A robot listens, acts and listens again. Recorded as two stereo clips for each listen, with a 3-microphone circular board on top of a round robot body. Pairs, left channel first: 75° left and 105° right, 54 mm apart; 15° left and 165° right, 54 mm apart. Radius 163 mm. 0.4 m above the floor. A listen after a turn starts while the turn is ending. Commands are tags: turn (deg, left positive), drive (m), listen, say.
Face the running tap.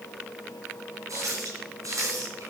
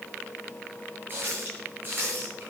<turn deg="-110"/>
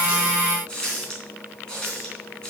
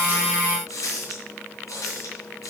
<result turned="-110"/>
<say>Facing the running tap, 2 to 4 m away.</say>